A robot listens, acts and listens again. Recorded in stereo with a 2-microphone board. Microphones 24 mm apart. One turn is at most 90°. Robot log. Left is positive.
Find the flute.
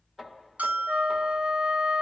note: The flute: about 50° right or 130° right.
cmd yaw -50
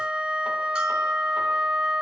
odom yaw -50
note: So it is at 75° right.
cmd yaw -75
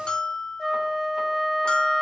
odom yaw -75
end: Found it: a flute, straight ahead.